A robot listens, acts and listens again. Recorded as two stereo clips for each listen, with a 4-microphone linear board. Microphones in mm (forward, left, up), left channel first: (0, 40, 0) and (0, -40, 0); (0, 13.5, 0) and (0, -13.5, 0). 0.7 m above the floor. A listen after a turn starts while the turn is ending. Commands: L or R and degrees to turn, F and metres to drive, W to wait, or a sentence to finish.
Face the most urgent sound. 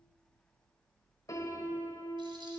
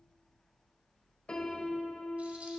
W
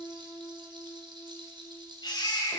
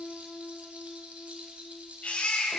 L65
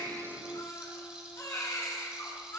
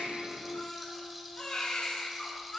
L45
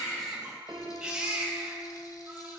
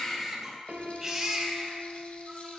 R15
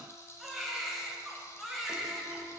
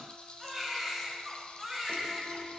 Facing the baby crying, 2 to 4 m away.